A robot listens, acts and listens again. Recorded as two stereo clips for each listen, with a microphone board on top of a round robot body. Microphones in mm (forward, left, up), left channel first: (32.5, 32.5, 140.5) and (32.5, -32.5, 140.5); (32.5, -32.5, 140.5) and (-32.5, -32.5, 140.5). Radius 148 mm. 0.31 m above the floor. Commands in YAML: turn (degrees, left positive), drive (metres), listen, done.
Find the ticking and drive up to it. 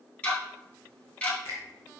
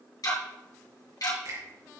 turn: 20
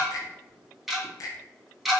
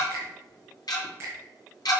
drive: 1.0
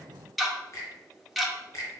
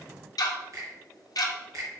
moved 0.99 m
drive: 1.0
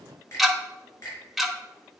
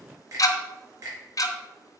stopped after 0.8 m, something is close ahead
done: "I am next to the ticking."